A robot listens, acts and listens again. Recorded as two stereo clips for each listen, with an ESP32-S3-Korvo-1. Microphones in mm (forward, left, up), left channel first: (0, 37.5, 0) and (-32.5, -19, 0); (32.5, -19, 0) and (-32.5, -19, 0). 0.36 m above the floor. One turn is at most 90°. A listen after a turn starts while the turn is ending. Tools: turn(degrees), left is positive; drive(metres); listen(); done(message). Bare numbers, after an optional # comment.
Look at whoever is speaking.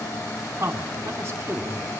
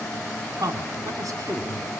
# The man speaking: 170° right.
turn(-90)
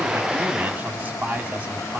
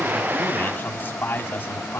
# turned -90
# The man speaking is now 55° right.
turn(-55)
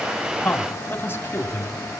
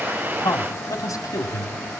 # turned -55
# The man speaking is now 15° left.
turn(15)
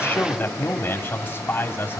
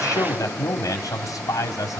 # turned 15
done("Facing the man speaking, 2 to 4 m away.")